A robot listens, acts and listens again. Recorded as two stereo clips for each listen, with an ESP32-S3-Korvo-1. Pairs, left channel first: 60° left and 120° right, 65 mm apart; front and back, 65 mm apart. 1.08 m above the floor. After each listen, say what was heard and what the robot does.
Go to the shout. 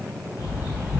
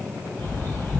Keep listening.
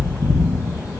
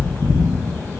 Keep listening.
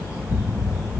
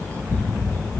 I can't make out a shout to turn to.